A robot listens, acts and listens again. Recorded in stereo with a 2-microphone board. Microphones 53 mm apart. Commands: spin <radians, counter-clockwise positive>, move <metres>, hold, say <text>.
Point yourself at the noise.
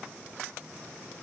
hold
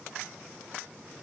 hold
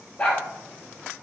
spin 0.61
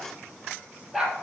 say Found it: a dog barking, straight ahead, 2 to 4 m away.